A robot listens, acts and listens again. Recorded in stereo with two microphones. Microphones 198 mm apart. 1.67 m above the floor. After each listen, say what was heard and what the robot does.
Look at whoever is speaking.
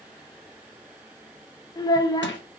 The child speaking: about 20° left or 160° left. Turn 20° left.
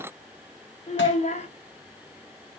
So it is at 135° left. Turn 135° left.
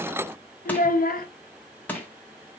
The child speaking is now 60° left. Turn 60° left.
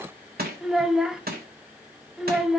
Facing the child speaking.